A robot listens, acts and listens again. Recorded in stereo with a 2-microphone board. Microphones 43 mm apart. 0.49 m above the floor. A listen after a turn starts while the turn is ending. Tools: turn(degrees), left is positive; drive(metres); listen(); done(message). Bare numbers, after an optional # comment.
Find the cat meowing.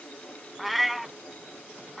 turn(-30)
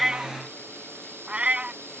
# So it is at 150° right.
turn(-150)
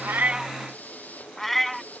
done("Found it: a cat meowing, straight ahead.")